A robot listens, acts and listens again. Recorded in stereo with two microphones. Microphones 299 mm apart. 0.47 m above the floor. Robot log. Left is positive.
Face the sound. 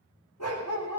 note: The dog barking: about 70° left or 110° left.
cmd yaw +70
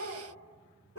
note: So it is at 45° left.
cmd yaw +45
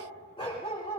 note: The dog barking is now 20° left.
cmd yaw +20
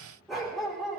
end: Found it: a dog barking, straight ahead.